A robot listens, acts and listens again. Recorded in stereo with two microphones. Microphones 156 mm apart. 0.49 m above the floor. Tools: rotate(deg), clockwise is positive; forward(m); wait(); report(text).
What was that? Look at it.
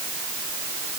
wait()
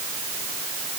wait()
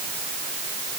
report("I can't make out anything.")